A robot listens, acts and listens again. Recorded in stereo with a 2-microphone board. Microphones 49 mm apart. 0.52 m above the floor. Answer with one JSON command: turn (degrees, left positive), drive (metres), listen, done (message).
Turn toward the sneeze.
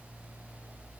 {"listen": true}
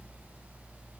{"listen": true}
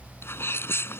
{"turn": 55}
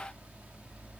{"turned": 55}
{"listen": true}
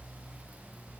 {"done": "I heard a sneeze, but can't make it out now. It was about straight ahead or 70° left."}